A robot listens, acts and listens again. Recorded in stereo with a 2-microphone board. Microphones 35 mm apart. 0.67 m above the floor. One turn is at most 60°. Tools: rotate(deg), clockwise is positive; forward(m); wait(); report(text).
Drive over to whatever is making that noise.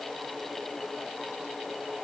wait()
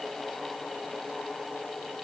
wait()
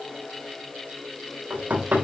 rotate(60)
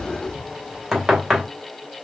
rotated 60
forward(1.0)
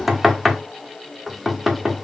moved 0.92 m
forward(1.0)
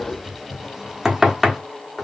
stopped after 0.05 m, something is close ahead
rotate(10)
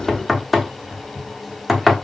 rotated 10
report("I am next to the knocking.")